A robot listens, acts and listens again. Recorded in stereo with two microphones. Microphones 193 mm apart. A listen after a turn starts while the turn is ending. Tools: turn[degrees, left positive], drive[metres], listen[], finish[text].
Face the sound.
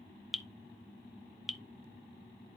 Action: turn[30]
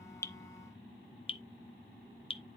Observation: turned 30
Thought: So it is at 150° left.
Action: turn[150]
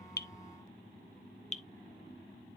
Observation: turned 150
Thought: The dripping is now 35° left.
Action: turn[35]
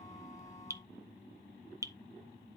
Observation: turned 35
Thought: The dripping is now 15° right.
Action: turn[-15]
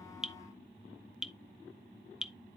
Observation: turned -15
Action: finish[Found it: dripping, straight ahead, under 1 m away.]